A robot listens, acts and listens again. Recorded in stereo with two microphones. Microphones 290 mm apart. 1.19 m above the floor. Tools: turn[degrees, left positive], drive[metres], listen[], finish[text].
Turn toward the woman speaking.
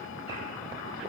Action: listen[]
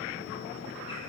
Action: listen[]
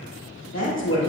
Thought: The woman speaking: about 70° left or 110° left.
Action: turn[70]
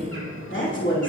Thought: So it is at 40° left.
Action: turn[40]
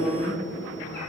Thought: The woman speaking is now 25° left.
Action: turn[25]
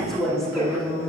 Action: finish[Found it: a woman speaking, straight ahead.]